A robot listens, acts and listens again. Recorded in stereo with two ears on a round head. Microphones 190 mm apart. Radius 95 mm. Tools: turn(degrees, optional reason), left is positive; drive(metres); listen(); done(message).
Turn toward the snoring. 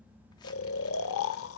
turn(degrees=70, reason="The snoring: about 70° left or 110° left.")
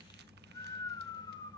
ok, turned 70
turn(degrees=20, reason="So it is at 20° left.")
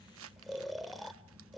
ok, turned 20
done("Found it: snoring, straight ahead, under 1 m away.")